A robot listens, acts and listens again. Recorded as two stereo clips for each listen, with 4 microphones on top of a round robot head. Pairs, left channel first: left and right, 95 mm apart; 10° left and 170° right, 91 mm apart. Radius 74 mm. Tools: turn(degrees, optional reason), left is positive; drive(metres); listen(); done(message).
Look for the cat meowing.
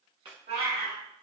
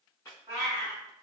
turn(degrees=-110, reason="The cat meowing: 110° right.")
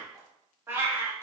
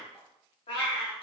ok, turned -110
turn(degrees=-25, reason="The cat meowing is now 25° right.")
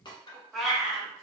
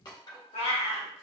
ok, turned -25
done("Facing the cat meowing, 1 to 2 m away.")